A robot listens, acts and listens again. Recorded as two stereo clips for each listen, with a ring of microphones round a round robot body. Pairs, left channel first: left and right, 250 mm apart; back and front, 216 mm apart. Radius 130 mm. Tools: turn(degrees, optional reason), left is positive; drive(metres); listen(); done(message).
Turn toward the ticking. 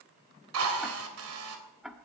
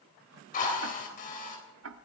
done("Facing the ticking, 1 to 2 m away.")